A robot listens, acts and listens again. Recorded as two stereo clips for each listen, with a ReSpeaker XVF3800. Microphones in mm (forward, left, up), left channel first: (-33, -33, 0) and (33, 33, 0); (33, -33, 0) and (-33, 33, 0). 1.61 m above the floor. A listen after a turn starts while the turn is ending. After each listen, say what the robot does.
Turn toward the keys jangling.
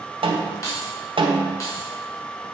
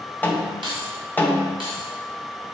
Turn 165° left.
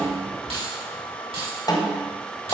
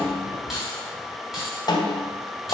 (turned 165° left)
Turn 45° left.
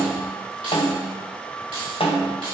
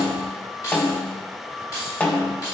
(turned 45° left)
Turn 10° left.
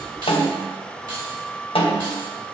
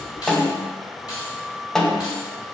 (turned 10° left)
Facing the keys jangling.